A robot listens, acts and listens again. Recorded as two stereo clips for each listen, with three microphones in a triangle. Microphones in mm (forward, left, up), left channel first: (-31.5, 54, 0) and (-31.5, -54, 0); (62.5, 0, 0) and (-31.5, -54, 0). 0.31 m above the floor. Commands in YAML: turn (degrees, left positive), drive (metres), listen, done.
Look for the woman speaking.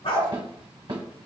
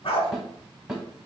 listen: true
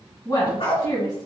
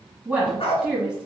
turn: 130
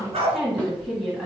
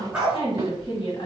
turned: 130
done: "Facing the woman speaking."